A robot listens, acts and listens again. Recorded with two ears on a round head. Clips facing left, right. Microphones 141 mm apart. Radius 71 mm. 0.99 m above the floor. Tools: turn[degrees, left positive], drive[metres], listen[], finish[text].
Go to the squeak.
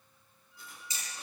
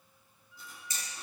Thought: The squeak: about 50° right or 130° right.
Action: turn[-50]
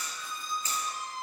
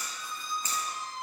Action: drive[1.0]
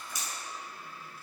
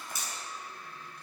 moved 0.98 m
Action: drive[1.0]
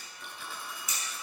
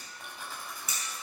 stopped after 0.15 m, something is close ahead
Action: listen[]
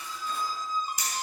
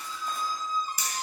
Thought: The squeak is now 10° left.
Action: turn[10]
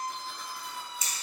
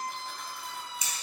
Action: finish[Arrived at the squeak, straight ahead.]